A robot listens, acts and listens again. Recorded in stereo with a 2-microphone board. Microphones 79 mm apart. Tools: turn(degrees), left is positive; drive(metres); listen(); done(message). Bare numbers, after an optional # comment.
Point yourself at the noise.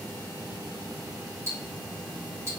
# The ticking: about 35° right or 145° right.
turn(-35)
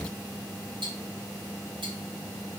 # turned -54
# So it is at 90° right.
turn(-90)
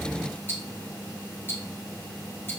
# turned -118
# The ticking is now 25° left.
turn(25)
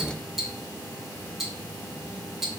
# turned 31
done("Found it: ticking, straight ahead.")